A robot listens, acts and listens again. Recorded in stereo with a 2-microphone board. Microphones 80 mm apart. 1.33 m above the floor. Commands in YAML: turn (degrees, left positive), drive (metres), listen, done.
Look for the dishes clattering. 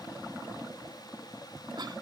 listen: true
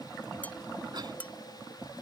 turn: 20
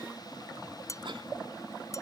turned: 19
turn: 140
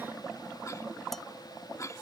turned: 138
listen: true
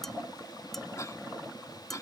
done: "Found it: dishes clattering, straight ahead."